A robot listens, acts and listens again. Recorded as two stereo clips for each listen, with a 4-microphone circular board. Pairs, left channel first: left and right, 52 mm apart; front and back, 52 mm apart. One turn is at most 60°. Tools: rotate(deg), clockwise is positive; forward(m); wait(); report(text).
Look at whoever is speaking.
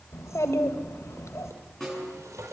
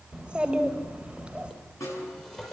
rotate(-60)
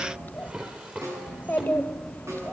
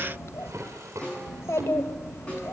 rotate(-35)
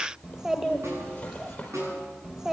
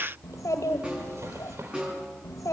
rotate(10)
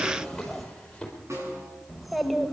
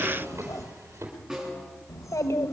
report("Found it: a child speaking, straight ahead, 1 to 2 m away.")